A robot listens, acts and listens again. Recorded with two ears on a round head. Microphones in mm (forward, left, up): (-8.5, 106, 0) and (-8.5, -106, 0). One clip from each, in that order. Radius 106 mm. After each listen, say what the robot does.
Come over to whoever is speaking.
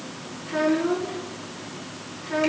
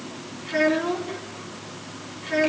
Turn 45° right.
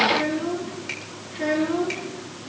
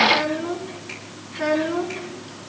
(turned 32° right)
Turn 15° right.
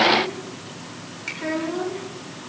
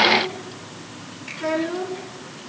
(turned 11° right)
Drive 1.0 m forward.
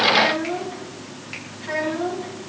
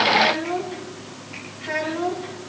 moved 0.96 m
Turn 10° right.
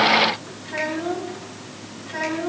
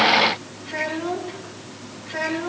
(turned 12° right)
Drive 1.0 m forward.
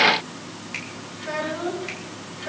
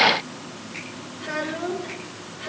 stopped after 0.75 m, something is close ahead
Turn 15° left.
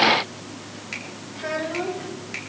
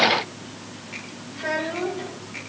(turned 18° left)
Something is in my way. I am facing the child speaking but have not reached it.